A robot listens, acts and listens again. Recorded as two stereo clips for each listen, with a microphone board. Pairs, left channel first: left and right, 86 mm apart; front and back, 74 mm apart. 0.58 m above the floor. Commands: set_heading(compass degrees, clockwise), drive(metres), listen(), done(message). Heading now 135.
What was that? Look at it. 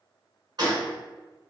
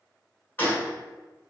set_heading(190)
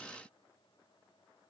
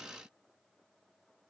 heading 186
done("Facing where the gunshot came from. I can't hear it now.")